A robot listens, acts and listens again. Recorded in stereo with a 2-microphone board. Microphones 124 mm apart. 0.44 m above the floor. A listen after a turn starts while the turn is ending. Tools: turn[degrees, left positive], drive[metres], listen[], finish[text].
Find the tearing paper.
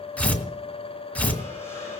Action: turn[30]
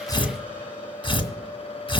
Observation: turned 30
Thought: So it is at 135° left.
Action: turn[135]
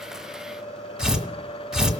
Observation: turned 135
Action: finish[Found it: tearing paper, straight ahead, 2 to 4 m away.]